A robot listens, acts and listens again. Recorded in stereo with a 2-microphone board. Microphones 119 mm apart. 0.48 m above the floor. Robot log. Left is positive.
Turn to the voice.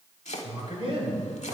note: The man speaking: about 50° right or 130° right.
cmd yaw -50
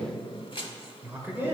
note: So it is at 20° right.
cmd yaw -20
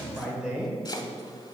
note: The man speaking is now 10° right.
cmd yaw -10
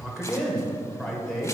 end: Facing the man speaking, 1 to 2 m away.